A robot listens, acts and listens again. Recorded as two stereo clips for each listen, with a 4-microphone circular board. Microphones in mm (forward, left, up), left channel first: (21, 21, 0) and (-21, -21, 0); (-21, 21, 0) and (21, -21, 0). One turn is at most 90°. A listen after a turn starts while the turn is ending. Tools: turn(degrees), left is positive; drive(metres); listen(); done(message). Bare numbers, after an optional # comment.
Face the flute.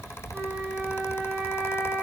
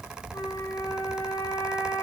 # The flute: 145° left.
turn(90)
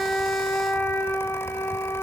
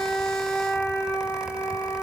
# The flute is now 85° left.
turn(85)
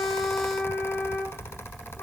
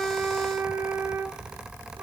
# The flute is now 15° right.
turn(-15)
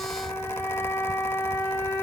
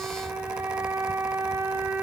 done("Found it: a flute, straight ahead, over 4 m away.")